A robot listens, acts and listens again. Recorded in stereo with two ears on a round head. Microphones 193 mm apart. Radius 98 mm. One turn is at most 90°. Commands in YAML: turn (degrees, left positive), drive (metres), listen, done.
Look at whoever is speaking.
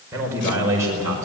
turn: -15
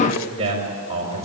turn: -30
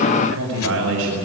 turn: -90
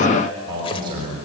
turn: -55
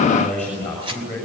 done: "Facing the man speaking."